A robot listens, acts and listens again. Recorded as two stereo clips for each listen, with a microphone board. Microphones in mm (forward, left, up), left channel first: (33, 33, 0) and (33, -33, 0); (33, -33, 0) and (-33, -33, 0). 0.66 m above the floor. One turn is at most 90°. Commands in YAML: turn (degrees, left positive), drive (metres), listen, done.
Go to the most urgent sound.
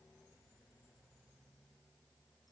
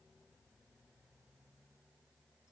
listen: true
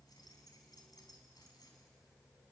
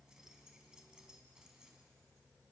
listen: true
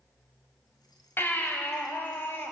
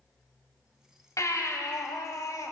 turn: 35
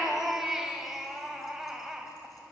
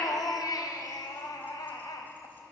drive: 1.0
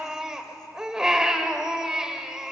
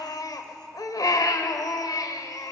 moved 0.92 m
turn: -10
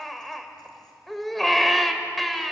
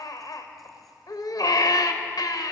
drive: 1.0
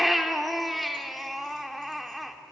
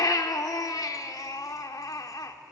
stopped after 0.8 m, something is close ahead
done: "I am next to the baby crying."